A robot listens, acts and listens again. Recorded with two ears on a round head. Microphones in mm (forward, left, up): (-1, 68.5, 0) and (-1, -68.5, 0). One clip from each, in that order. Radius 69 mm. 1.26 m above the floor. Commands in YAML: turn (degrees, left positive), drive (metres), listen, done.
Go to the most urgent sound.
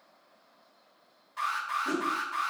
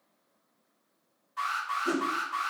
turn: 30
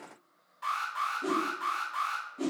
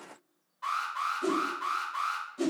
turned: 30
turn: 140
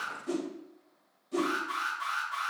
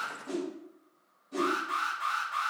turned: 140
turn: 25
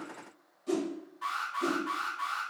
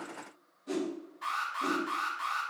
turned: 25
drive: 1.0
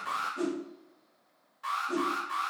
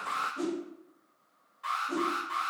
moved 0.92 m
turn: 10
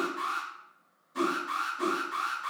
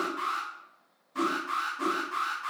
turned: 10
drive: 1.0
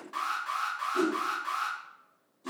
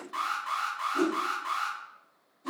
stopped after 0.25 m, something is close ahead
done: "I am next to the alarm."